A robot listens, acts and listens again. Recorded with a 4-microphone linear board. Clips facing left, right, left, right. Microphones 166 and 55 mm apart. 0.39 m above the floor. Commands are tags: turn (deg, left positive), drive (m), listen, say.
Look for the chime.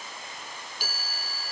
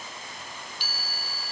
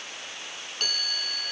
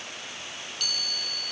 <turn deg="45"/>
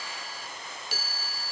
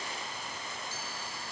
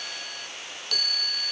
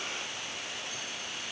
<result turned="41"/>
<turn deg="95"/>
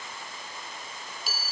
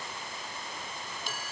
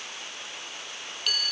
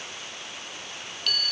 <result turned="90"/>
<say>Facing the chime.</say>